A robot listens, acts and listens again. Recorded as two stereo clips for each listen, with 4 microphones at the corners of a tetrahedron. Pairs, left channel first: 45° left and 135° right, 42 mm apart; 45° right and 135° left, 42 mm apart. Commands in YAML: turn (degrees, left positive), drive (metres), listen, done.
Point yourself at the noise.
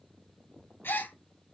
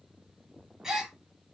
turn: 55
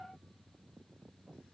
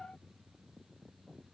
done: "Facing where the gasp came from. I can't hear it now."